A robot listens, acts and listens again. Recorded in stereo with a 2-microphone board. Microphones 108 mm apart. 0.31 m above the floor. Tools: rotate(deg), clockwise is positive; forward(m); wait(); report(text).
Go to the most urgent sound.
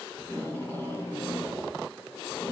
wait()
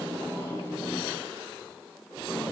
wait()
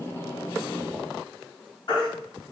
rotate(-45)
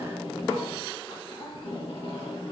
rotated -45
wait()
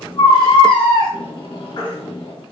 rotate(-80)
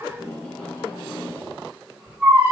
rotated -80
rotate(15)
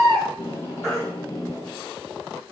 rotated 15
forward(1.0)
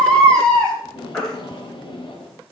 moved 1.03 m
rotate(-10)
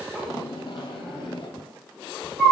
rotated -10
forward(1.0)
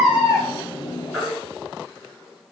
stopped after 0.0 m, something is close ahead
report("Arrived at the baby crying, straight ahead.")